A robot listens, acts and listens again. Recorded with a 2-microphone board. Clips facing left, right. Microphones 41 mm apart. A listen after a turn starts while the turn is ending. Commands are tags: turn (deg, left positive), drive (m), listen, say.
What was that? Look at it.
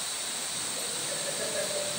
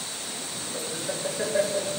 <turn deg="-65"/>
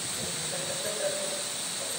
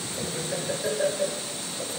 <turn deg="-55"/>
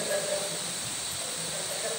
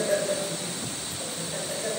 <turn deg="-10"/>
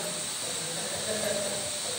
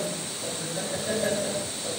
<say>Found it: laughter, straight ahead, over 4 m away.</say>